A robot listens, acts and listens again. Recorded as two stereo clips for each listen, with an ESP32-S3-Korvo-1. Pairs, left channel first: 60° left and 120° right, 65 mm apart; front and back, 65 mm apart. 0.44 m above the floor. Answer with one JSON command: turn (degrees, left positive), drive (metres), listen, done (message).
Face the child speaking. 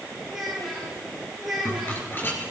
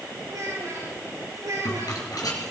{"turn": 155}
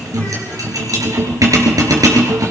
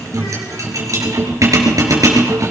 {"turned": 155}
{"listen": true}
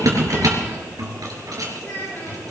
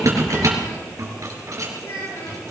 {"done": "Found it: a child speaking, straight ahead, over 4 m away."}